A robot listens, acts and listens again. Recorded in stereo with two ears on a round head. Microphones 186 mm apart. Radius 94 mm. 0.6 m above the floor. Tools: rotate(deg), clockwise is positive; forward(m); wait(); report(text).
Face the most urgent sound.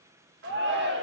rotate(55)
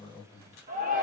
rotate(50)
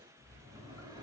wait()
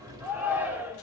rotate(10)
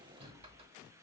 wait()
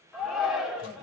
report("Found it: a shout, straight ahead.")